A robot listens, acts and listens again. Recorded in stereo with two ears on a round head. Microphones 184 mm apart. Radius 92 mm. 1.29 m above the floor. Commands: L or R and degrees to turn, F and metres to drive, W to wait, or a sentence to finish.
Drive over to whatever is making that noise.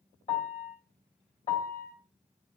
L35
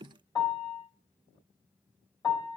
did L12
L20
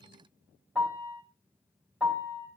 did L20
F1.0
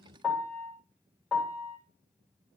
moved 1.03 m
F1.0
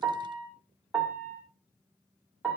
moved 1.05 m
F1.0
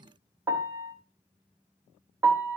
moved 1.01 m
R15
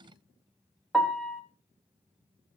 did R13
F1.0
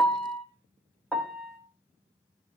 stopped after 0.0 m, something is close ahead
I am next to the piano.